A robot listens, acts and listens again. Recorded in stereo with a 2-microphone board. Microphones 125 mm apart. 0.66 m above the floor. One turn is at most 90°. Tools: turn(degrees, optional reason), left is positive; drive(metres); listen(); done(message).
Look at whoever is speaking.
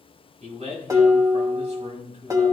turn(degrees=-60, reason="The man speaking: about 60° right or 120° right.")
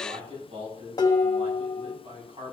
turn(degrees=-55, reason="So it is at 55° right.")
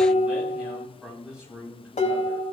turn(degrees=-10, reason="The man speaking is now 10° right.")
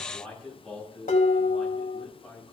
done("Found it: a man speaking, straight ahead, over 4 m away.")